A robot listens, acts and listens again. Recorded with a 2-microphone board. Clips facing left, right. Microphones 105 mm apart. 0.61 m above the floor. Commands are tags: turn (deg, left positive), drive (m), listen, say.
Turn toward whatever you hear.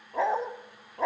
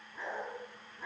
<turn deg="90"/>
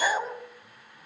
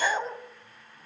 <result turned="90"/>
<say>Facing the dog barking, 1 to 2 m away.</say>